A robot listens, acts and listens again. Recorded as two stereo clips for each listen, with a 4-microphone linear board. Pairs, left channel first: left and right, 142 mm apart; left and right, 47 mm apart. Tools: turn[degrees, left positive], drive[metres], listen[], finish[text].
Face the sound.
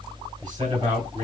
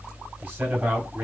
Thought: The man speaking: about 30° right or 150° right.
Action: turn[-30]
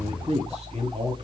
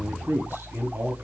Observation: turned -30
Thought: So it is at 110° right.
Action: turn[-110]
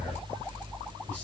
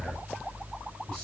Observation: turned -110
Action: listen[]
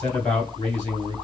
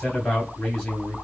Thought: The man speaking is now 15° left.
Action: turn[15]
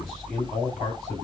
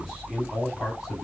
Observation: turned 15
Action: finish[Found it: a man speaking, straight ahead.]